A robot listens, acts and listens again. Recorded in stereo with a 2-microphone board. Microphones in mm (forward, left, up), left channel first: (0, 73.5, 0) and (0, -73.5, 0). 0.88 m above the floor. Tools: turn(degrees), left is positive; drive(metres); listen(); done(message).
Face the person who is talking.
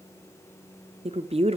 turn(degrees=-40)
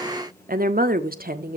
turn(degrees=-95)
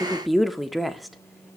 done("Found it: a woman speaking, straight ahead.")